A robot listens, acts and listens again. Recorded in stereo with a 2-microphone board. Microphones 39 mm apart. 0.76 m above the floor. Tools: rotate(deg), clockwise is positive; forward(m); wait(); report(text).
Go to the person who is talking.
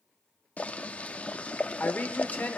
rotate(-55)
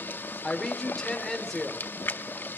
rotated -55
rotate(-10)
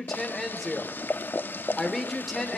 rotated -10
forward(1.0)
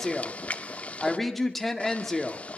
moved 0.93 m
forward(1.0)
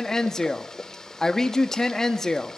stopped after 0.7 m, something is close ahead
rotate(-20)
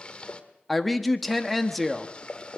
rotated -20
report("Arrived at the woman speaking, straight ahead.")